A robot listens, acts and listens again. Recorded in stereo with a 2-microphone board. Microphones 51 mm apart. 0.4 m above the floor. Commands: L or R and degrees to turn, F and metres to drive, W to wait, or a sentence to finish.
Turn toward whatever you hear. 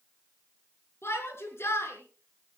L50
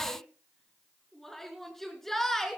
Facing the shout, over 4 m away.